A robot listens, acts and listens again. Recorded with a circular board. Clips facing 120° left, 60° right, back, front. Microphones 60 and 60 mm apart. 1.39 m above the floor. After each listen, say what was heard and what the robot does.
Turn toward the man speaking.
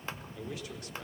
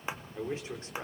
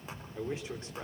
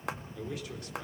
The man speaking: 120° right. Turn 120° right.
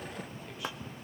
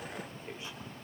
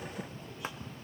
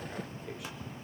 Keep listening.
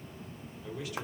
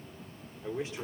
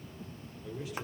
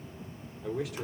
Facing the man speaking.